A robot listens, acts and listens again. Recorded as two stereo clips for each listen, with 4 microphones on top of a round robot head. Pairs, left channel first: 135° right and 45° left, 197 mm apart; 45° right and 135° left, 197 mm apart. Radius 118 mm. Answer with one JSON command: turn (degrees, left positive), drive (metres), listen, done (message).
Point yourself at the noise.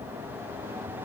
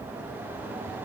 {"listen": true}
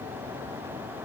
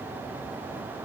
{"listen": true}
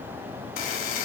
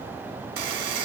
{"turn": 175}
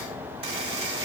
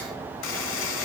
{"turn": -20}
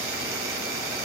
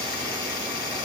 {"done": "Found it: a buzzer, straight ahead."}